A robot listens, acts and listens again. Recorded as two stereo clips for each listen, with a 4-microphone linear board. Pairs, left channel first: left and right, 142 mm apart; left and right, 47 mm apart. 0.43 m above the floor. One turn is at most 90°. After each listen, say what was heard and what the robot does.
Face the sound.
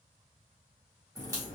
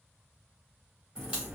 The crack: about 20° right or 160° right. Turn 20° right.
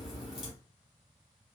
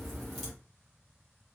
Found it: a crack, straight ahead, 2 to 4 m away.